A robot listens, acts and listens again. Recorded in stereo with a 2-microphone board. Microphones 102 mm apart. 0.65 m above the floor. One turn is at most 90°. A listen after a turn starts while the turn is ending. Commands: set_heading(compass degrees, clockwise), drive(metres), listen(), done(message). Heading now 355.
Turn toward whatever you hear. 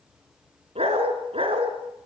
set_heading(55)
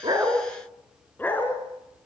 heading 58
set_heading(38)
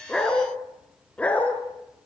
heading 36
set_heading(21)
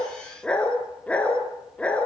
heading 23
set_heading(13)
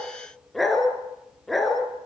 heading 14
done("Found it: a dog barking, straight ahead.")